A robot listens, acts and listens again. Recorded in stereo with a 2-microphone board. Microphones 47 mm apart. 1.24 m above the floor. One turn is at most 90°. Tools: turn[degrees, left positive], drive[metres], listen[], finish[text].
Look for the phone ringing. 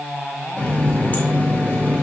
Action: listen[]
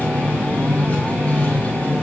Action: listen[]
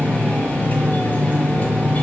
Action: finish[I can't make out a phone ringing to turn to.]